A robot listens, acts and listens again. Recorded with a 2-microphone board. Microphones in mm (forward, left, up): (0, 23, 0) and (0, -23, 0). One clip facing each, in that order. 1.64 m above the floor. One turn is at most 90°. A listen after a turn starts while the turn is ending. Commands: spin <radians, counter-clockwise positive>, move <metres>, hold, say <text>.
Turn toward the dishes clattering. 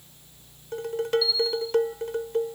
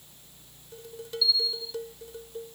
spin 1.13
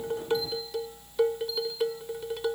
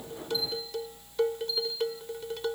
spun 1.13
say Found it: dishes clattering, straight ahead.